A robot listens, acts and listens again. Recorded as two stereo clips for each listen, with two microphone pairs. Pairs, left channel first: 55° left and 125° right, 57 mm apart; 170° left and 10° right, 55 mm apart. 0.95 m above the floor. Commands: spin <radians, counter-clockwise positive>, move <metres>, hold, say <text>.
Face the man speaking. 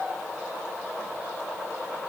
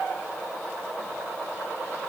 hold
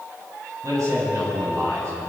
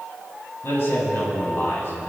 spin -2.53
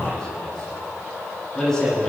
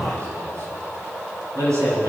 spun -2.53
spin -0.44
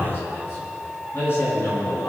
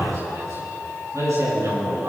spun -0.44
spin 0.17
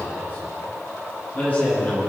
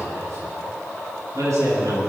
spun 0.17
say Facing the man speaking.